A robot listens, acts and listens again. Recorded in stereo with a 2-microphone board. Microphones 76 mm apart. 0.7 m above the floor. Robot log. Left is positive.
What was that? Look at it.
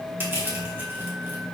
note: The crushing: about 30° right or 150° right.
cmd yaw -30
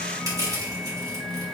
note: So it is at 115° right.
cmd yaw -115
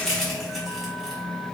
end: Found it: crushing, straight ahead.